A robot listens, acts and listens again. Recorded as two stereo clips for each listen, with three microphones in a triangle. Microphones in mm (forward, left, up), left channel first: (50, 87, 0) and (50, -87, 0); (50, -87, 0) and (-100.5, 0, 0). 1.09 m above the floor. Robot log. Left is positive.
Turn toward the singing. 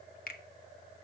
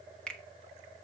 cmd idle
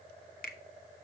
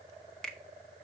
cmd idle
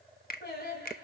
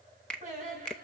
note: The singing: 110° left.
cmd yaw +110
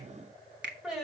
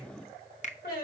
end: Found it: singing, straight ahead.